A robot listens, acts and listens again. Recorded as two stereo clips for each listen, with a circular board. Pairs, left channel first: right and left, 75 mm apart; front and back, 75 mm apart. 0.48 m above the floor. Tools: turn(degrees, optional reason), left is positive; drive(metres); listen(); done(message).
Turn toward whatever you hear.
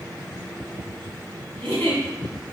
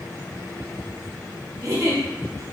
turn(degrees=-155, reason="The giggle: 155° right.")
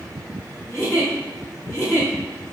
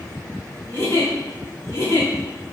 turn(degrees=-45, reason="The giggle is now 45° right.")
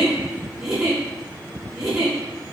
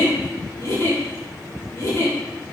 done("Found it: a giggle, straight ahead.")